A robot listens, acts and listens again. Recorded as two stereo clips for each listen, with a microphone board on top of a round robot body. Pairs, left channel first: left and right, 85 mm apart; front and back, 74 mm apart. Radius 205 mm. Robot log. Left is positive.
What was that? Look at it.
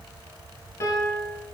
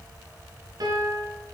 note: The piano: 145° left.
cmd yaw +145
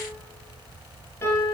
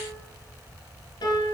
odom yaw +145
note: The piano is now 25° left.
cmd yaw +25
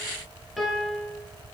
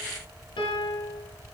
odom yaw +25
end: Found it: a piano, straight ahead, 1 to 2 m away.